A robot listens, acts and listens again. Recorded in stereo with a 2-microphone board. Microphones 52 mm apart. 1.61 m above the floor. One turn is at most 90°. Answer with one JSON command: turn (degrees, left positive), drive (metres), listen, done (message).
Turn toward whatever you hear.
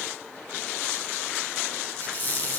{"turn": 45}
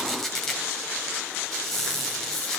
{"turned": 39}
{"turn": 10}
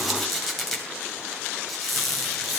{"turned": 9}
{"done": "Found it: a squeak, straight ahead, 2 to 4 m away."}